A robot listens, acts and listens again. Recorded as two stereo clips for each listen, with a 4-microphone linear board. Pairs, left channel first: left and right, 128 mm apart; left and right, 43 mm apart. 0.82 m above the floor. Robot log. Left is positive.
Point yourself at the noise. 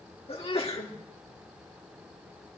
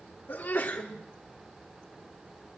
note: The sneeze: about 50° left or 130° left.
cmd yaw +50
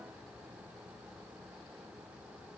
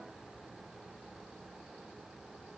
cmd idle
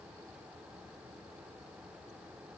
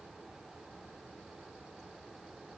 end: I heard a sneeze, but can't make it out now. It was about straight ahead or 80° left.